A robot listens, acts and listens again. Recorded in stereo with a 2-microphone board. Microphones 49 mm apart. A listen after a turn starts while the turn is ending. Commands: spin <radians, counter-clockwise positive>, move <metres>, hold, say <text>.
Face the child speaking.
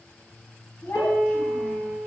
spin 1.22
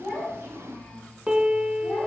spin 0.96
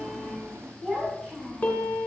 say Facing the child speaking.